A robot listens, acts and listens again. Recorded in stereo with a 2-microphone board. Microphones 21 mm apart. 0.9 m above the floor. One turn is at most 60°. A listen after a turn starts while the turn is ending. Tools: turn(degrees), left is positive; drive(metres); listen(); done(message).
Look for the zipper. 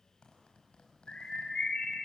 turn(degrees=50)
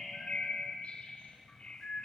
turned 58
listen()
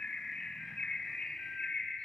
listen()
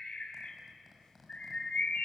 done("Found it: a zipper, straight ahead.")